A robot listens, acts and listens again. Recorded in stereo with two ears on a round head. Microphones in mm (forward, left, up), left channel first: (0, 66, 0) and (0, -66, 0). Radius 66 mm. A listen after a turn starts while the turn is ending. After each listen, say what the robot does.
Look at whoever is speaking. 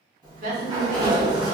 Turn 60° right.
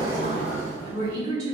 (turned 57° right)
Turn 35° right.
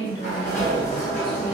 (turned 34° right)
Keep listening.
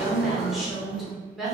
Found it: a woman speaking, straight ahead.